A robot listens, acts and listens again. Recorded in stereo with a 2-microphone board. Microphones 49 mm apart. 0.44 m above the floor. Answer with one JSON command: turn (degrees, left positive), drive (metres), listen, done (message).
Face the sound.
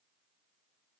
{"listen": true}
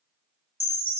{"turn": -60}
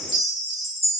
{"done": "Found it: a chime, straight ahead."}